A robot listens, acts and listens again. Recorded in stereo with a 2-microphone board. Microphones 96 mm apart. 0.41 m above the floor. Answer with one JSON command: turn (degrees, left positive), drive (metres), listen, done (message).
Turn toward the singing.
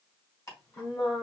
{"turn": 65}
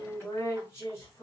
{"turn": 25}
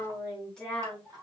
{"done": "Facing the singing."}